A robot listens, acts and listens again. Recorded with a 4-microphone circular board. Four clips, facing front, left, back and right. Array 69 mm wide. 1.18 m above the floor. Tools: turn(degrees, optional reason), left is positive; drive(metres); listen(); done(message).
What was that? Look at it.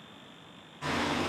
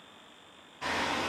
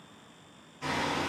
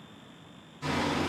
turn(degrees=80, reason="The hammering: 80° left.")
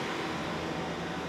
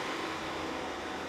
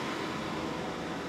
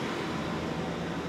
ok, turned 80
done("Found it: hammering, straight ahead.")